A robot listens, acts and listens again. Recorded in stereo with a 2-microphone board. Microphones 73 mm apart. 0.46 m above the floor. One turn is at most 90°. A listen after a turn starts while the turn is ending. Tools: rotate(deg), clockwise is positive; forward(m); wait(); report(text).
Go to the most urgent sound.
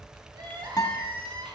rotate(90)
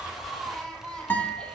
rotate(-10)
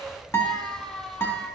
forward(1.0)
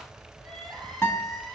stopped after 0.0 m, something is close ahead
report("Something is in my way. I am facing the crying but have not reached it.")